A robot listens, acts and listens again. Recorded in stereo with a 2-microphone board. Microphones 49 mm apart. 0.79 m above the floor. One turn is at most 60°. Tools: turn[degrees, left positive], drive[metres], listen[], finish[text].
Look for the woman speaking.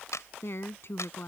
Thought: The woman speaking: about 50° left or 130° left.
Action: turn[50]
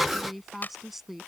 Action: finish[Found it: a woman speaking, straight ahead.]